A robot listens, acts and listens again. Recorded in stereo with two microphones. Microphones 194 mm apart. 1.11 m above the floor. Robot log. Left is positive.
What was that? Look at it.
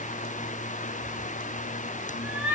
cmd yaw -30
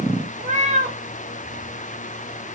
note: So it is at 140° right.
cmd yaw -140
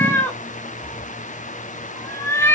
note: The cat meowing is now 15° left.
cmd yaw +15
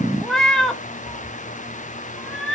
end: Facing the cat meowing.